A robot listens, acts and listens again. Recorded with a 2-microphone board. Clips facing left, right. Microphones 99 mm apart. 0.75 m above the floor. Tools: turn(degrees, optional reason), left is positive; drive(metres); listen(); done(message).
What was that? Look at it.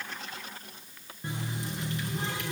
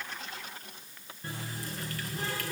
turn(degrees=20, reason="The running tap: about 20° left or 160° left.")
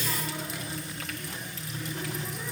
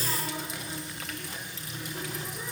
done("Facing the running tap.")